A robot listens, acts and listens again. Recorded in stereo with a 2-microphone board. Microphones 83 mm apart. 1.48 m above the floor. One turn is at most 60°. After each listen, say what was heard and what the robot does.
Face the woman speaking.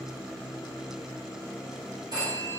Keep listening.
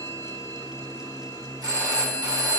Keep listening.
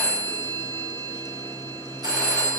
I can't make out a woman speaking, only a phone ringing.